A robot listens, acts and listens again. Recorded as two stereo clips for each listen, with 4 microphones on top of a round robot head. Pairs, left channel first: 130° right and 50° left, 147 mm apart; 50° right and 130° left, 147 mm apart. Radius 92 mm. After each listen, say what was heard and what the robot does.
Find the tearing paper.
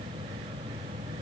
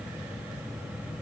Keep listening.
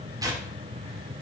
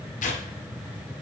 The tearing paper: 20° right. Turn 20° right.
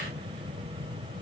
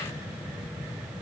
Keep listening.
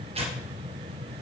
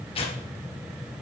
Found it: tearing paper, straight ahead.